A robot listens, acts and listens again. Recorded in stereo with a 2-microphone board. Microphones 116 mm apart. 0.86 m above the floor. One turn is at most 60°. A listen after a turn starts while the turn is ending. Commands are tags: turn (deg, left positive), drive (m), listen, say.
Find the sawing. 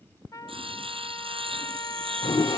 <turn deg="-55"/>
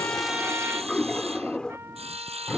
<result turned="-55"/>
<turn deg="-60"/>
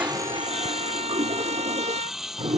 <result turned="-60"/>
<say>Facing the sawing.</say>